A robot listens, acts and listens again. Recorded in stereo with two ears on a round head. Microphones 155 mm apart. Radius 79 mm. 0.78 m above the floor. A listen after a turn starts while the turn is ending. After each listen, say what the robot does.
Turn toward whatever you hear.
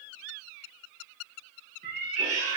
Turn 40° right.
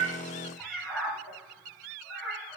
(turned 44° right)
Facing the cat meowing.